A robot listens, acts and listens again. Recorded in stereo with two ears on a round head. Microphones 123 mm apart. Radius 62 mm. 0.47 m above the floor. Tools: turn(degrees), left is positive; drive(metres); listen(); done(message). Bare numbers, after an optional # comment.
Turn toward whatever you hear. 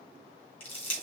# The crushing: about 45° left or 135° left.
turn(45)
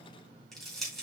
done("Found it: crushing, straight ahead.")